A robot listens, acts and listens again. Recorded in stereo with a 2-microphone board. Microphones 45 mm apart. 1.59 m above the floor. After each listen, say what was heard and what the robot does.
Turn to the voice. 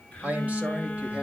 The man speaking: about 30° right or 150° right. Turn 30° right.
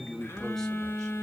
So it is at 10° left. Turn 10° left.
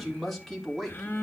Facing the man speaking, 2 to 4 m away.